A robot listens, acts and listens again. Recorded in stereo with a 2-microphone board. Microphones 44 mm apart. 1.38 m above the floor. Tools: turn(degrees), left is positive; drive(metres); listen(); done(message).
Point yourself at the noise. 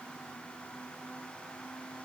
listen()
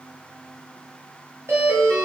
turn(degrees=-70)
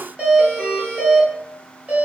turn(degrees=-30)
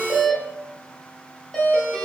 done("Facing the doorbell, 1 to 2 m away.")